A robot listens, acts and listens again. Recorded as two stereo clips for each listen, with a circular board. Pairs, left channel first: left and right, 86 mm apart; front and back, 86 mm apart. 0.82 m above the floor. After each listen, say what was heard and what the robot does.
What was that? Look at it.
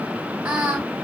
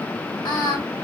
The singing: 20° right. Turn 20° right.
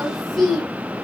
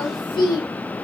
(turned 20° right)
Facing the singing, 1 to 2 m away.